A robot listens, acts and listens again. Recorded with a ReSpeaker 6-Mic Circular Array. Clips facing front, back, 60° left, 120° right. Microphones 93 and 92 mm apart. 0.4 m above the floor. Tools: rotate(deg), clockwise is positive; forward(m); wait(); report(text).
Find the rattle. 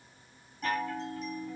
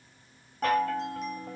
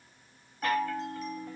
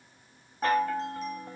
wait()
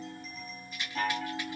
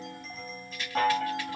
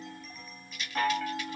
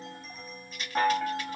rotate(70)
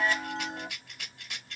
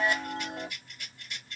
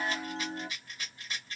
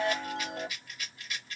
report("Found it: a rattle, straight ahead.")